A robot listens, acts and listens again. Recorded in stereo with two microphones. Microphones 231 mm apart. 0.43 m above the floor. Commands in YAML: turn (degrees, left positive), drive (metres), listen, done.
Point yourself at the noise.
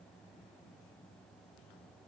listen: true
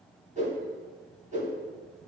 turn: -30
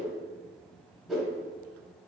done: "Facing the whoosh, 1 to 2 m away."